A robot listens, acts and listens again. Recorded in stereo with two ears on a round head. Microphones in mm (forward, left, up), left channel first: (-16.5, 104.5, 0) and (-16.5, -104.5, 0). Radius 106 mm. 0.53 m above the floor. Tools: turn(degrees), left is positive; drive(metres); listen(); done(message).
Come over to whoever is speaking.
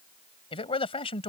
turn(degrees=25)
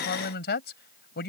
turn(degrees=130)
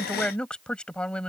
drive(metres=1.0)
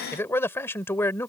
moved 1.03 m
turn(degrees=10)
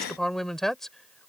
drive(metres=1.0)
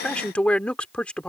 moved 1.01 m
drive(metres=1.0)
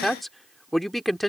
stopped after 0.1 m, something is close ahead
done("Arrived at the man speaking, straight ahead.")